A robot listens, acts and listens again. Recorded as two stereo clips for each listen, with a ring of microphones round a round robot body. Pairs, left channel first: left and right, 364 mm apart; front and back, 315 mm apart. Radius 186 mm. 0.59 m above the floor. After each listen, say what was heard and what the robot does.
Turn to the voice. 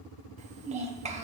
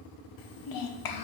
The child speaking: 20° right. Turn 20° right.
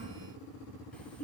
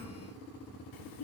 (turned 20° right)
Facing the child speaking, 1 to 2 m away.